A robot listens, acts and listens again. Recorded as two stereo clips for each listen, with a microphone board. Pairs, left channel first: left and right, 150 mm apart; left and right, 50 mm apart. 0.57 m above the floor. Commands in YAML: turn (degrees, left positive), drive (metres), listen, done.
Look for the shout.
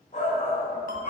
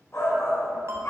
turn: 60
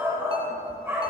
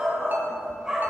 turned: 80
turn: -15
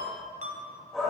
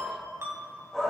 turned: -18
done: "Found it: a shout, straight ahead."